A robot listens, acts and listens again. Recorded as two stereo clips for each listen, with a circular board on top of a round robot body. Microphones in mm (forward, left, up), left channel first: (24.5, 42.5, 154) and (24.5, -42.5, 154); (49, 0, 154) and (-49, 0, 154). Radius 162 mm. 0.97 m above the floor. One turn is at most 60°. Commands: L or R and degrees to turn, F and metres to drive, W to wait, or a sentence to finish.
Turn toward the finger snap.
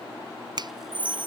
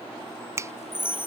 R60
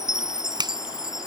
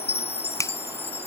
R60
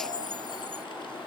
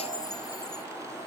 W
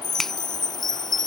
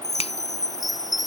W
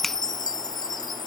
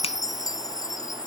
I heard a finger snap from this way, but can't make it out now.